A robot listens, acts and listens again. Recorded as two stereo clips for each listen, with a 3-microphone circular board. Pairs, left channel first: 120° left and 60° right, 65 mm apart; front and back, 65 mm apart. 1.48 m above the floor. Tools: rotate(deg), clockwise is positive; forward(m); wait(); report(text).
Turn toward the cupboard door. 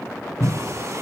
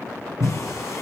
rotate(170)
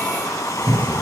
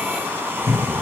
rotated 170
rotate(15)
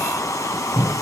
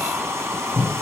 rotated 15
report("Facing the cupboard door.")